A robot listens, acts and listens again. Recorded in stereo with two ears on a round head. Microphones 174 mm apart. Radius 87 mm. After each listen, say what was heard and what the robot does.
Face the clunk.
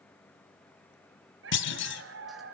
The clunk: about 65° left or 115° left. Turn 65° left.
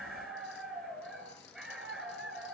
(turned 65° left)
Keep listening.
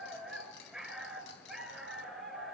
I heard a clunk, but can't make it out now. It was about straight ahead or 50° left.